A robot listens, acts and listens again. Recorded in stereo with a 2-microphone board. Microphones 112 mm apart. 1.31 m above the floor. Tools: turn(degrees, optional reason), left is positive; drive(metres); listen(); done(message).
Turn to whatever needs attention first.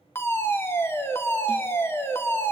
turn(degrees=20, reason="The fire alarm: about 20° left or 160° left.")
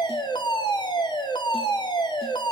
turn(degrees=135, reason="So it is at 135° left.")
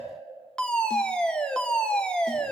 turn(degrees=10, reason="The fire alarm is now 10° left.")
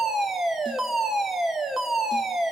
done("Found it: a fire alarm, straight ahead.")